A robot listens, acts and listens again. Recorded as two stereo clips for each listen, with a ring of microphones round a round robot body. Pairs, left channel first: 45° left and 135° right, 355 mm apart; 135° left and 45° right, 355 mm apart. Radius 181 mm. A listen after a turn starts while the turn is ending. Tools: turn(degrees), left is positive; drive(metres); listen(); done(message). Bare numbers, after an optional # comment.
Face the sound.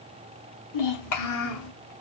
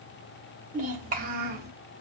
# The child speaking: 15° left.
turn(15)
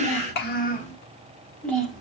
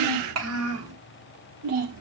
# The child speaking is now 50° right.
turn(-50)
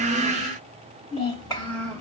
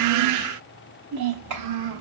# The child speaking is now 40° right.
turn(-40)
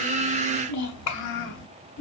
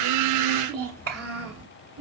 done("Facing the child speaking, 1 to 2 m away.")